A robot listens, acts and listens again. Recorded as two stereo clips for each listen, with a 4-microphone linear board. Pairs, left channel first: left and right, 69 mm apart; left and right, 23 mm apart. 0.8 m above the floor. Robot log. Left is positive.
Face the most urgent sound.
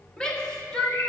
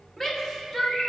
cmd yaw +30
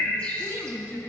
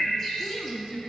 note: So it is at 140° left.
cmd yaw +140
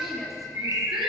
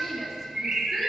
end: Found it: a shout, straight ahead, 1 to 2 m away.